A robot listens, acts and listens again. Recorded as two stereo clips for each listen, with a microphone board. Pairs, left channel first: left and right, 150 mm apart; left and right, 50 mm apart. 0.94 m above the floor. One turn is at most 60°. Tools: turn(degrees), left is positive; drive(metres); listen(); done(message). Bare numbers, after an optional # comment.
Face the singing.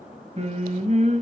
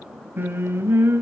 # The singing: about 50° right or 130° right.
turn(-50)
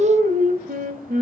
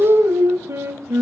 # So it is at 60° right.
turn(-60)
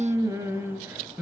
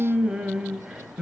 # The singing is now 10° right.
turn(-10)
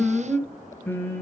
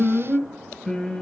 # The singing is now 15° left.
turn(15)
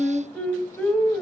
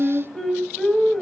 done("Facing the singing, 2 to 4 m away.")